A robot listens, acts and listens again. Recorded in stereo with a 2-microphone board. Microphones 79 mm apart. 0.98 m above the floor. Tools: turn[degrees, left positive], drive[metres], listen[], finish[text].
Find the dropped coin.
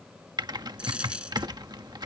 Action: turn[-30]
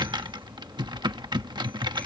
Action: listen[]
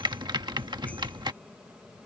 Action: finish[I heard a dropped coin, but can't make it out now. It was about 15° left or 135° right.]